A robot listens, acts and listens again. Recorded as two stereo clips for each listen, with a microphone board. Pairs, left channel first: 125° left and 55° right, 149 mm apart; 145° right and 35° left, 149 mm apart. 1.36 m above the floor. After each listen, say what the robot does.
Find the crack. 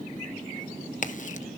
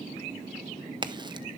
Turn 95° left.
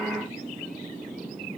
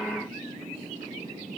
I heard a crack from this way, but can't make it out now.